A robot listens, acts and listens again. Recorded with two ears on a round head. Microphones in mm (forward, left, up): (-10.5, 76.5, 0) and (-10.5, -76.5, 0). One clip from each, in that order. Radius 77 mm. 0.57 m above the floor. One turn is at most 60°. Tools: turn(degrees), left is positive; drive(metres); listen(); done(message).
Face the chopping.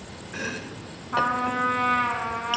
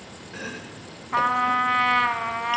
turn(degrees=30)
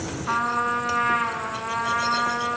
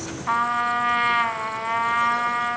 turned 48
listen()
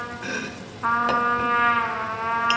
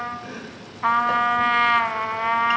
turn(degrees=60)
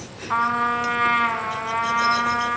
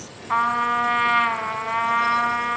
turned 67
turn(degrees=50)
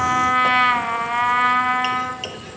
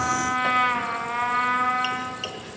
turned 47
done("Found it: chopping, straight ahead.")